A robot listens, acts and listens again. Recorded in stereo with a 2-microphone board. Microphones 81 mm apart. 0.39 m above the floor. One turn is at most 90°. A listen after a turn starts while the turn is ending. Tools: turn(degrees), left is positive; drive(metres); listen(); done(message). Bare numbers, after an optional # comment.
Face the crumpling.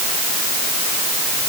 listen()
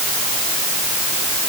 listen()
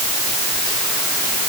done("I can't make out crumpling to turn to.")